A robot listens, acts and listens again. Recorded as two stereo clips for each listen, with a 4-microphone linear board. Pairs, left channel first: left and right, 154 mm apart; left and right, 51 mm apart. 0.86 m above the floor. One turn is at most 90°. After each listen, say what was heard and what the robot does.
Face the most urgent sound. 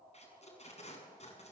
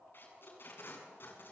Keep listening.
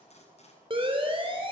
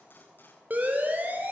The siren: about 35° right or 145° right. Turn 35° right.
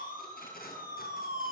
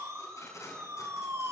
So it is at 105° right. Turn 90° right.
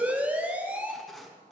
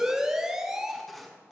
The siren is now 10° right. Turn 10° right.
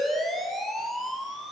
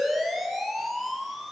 Facing the siren, over 4 m away.